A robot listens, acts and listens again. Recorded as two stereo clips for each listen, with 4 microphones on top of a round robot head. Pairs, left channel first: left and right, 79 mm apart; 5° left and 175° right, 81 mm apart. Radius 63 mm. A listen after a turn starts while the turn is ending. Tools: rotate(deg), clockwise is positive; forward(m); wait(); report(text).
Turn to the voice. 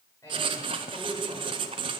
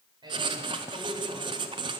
rotate(-155)
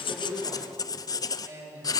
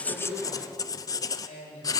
rotate(40)
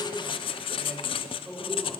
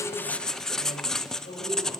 report("Found it: a man speaking, straight ahead, over 4 m away.")